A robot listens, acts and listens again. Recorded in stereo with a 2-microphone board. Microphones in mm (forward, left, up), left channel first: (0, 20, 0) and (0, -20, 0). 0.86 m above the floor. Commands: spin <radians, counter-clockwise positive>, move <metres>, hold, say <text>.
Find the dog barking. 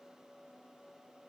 hold
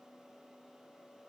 hold
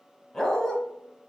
spin 0.26
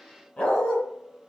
spin 2.62
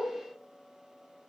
hold
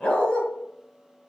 spin 0.44
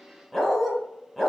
say Found it: a dog barking, straight ahead.